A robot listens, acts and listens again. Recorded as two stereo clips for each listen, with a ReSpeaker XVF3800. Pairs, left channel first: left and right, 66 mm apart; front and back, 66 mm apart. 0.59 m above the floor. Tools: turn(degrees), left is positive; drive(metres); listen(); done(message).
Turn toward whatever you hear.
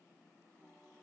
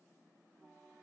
listen()
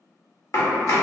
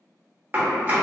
turn(degrees=120)
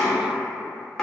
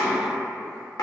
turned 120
done("Facing the chopping.")